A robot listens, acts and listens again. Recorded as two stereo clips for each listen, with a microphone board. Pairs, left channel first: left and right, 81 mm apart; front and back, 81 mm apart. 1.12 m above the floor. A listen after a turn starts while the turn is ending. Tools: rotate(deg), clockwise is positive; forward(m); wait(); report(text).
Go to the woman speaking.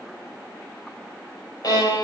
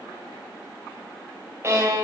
wait()
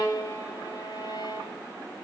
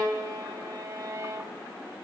wait()
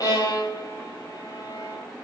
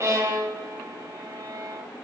report("I can't make out a woman speaking to turn to.")